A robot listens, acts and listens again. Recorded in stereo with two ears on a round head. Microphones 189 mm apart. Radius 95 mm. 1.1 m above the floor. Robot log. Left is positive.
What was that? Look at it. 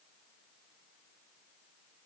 cmd idle
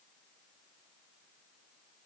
cmd idle
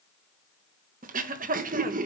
note: The throat clearing: about 40° right or 140° right.
cmd yaw -40
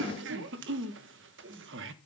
note: So it is at 95° right.
cmd yaw -95
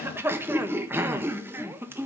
note: The throat clearing is now 10° right.
cmd yaw -10
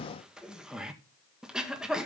end: Facing the throat clearing.